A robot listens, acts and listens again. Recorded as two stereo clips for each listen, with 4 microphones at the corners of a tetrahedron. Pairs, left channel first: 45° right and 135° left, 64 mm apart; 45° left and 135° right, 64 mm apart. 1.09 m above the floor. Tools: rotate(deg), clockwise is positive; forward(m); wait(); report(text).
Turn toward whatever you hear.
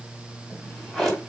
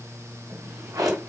rotate(135)
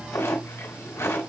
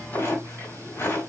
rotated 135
rotate(10)
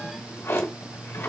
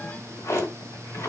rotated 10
report("Found it: a drawer, straight ahead.")